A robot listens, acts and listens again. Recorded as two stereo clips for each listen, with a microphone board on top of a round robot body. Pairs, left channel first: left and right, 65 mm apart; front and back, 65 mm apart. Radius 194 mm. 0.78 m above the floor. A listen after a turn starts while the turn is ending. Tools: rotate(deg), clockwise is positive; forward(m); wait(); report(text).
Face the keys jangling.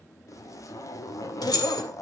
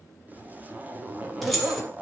rotate(-95)
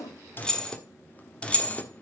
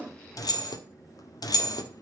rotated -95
rotate(-25)
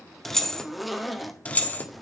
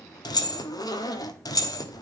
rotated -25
rotate(-30)
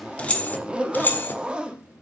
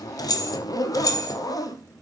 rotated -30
rotate(-30)
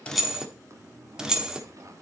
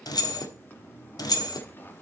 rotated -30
rotate(10)
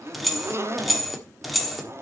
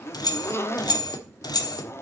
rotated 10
report("Facing the keys jangling, 1 to 2 m away.")